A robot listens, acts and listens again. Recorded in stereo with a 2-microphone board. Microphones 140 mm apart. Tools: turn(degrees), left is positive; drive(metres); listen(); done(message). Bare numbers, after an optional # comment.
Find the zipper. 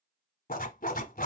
turn(90)
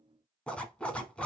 # So it is at 10° left.
turn(10)
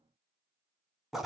done("Facing the zipper.")